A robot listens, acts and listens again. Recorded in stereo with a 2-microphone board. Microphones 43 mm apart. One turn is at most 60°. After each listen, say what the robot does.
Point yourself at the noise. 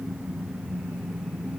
Keep listening.
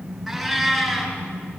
Turn 30° left.
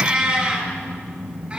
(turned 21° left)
Turn 15° right.
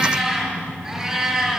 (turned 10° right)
Found it: a cat meowing, straight ahead.